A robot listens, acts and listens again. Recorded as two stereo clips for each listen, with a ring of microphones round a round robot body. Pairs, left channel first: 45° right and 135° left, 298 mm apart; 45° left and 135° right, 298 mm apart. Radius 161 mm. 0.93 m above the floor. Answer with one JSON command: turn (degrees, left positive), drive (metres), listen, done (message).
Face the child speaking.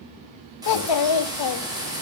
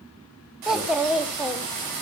{"turn": -45}
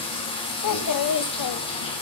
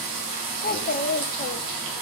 {"turn": -15}
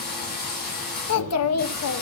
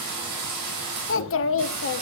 {"done": "Found it: a child speaking, straight ahead."}